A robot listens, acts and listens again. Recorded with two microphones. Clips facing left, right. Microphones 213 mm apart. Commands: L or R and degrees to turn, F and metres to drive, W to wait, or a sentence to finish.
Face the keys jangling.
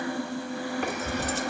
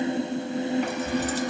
L65
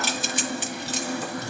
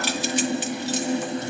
L55
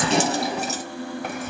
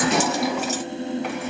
L35
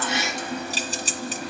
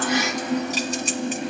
L35
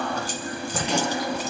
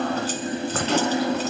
L15
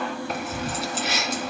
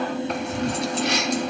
Facing the keys jangling, 2 to 4 m away.